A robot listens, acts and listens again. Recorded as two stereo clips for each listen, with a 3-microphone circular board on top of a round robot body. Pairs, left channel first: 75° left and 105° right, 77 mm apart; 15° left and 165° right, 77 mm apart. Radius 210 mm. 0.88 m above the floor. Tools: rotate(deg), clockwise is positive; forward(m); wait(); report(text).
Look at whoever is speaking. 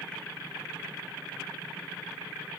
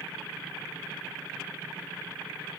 wait()
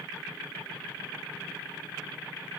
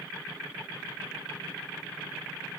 wait()
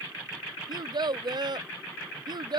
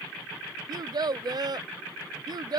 rotate(135)
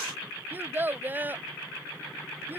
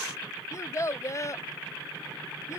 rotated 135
rotate(40)
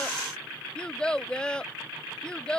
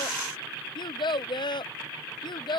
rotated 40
report("Found it: a child speaking, straight ahead.")